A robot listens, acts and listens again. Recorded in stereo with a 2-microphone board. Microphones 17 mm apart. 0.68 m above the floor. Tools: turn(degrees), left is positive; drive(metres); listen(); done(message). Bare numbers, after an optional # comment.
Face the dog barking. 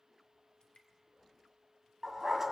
# The dog barking: about 35° right or 145° right.
turn(-35)
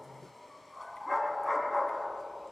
done("Facing the dog barking.")